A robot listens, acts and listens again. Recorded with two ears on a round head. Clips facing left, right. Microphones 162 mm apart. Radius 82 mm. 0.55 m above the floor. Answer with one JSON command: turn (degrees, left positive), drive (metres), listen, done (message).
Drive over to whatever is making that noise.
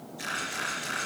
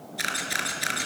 {"turn": -70}
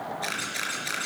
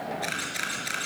{"drive": 1.0}
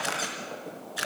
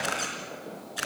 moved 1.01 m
{"drive": 1.0}
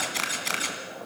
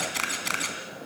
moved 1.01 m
{"drive": 1.0}
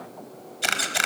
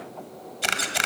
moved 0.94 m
{"drive": 1.0}
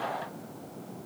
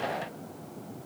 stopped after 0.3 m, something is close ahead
{"listen": true}
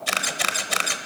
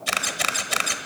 {"done": "I am next to the camera shutter."}